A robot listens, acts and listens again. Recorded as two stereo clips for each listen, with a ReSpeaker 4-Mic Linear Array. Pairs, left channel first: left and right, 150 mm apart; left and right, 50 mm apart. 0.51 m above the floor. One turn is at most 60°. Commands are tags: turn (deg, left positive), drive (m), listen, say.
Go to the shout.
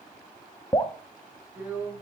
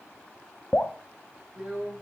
<listen/>
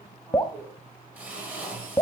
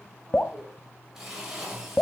<listen/>
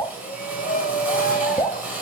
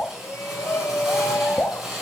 <turn deg="60"/>
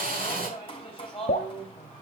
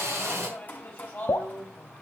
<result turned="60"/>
<turn deg="40"/>
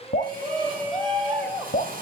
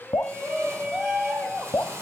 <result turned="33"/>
<drive m="1.0"/>
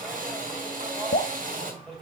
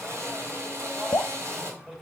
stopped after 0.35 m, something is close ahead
<say>Blocked. The shout is further on, straight ahead.</say>